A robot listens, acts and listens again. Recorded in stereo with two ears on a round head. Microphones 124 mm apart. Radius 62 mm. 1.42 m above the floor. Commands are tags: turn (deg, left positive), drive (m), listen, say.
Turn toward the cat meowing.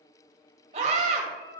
<turn deg="70"/>
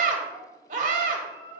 <turn deg="35"/>
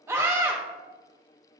<listen/>
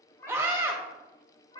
<turn deg="30"/>
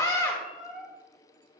<say>Facing the cat meowing.</say>